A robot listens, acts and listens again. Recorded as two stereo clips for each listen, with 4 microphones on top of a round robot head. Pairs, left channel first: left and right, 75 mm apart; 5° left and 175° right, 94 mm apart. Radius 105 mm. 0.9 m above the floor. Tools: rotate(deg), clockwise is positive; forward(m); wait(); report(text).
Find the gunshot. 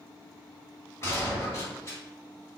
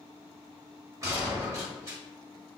rotate(-135)
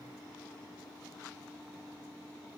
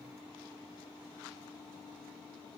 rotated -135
report("Facing where the gunshot came from. I can't hear it now.")